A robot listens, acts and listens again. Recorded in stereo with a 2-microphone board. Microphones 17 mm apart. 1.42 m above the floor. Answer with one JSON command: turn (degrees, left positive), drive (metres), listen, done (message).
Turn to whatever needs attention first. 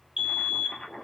{"turn": -55}
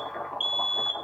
{"turn": -60}
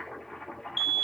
{"turn": -10}
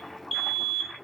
{"done": "Found it: a fire alarm, straight ahead."}